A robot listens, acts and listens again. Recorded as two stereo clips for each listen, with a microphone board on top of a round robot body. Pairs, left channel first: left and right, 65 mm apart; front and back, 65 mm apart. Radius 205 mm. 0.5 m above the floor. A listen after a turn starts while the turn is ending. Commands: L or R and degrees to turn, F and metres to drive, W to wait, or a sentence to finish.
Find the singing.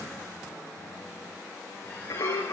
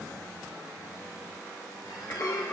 L60
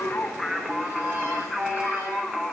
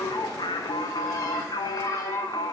Facing the singing, under 1 m away.